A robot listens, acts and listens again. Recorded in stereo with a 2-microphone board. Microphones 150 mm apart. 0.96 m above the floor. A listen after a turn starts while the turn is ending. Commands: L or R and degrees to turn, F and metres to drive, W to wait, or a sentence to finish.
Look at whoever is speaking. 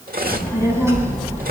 R15
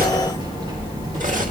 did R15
R25
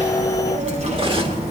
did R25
R135
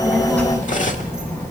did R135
L15
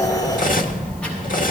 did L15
Found it: a child speaking, straight ahead.